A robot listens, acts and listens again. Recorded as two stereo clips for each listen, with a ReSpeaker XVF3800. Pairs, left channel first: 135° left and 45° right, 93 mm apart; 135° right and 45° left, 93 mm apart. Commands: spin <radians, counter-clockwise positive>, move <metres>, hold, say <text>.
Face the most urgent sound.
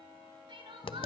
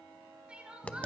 spin -0.52
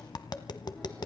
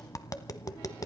hold
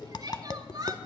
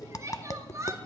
say Facing the crying, over 4 m away.